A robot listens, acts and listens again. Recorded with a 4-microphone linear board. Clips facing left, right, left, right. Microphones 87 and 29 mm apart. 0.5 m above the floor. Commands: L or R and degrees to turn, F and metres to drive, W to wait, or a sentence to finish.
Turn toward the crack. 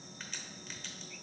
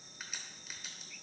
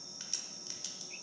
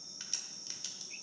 R30
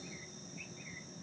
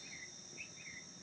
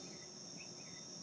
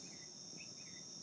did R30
W
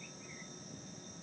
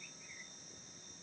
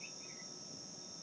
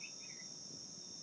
I heard a crack, but can't make it out now. It was about 20° left or 140° right.